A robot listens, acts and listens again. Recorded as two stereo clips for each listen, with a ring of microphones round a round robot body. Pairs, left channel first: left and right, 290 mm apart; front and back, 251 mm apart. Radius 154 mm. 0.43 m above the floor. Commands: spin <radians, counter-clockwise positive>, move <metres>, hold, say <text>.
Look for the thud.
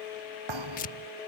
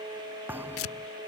spin -1.66
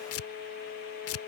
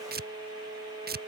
say I heard a thud from this way, but can't make it out now.